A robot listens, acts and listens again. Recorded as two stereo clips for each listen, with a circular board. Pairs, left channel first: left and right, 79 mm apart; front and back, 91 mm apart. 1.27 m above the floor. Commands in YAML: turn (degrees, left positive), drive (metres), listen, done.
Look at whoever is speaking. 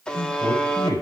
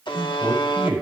turn: -105
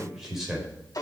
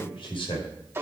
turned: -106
done: "Facing the man speaking."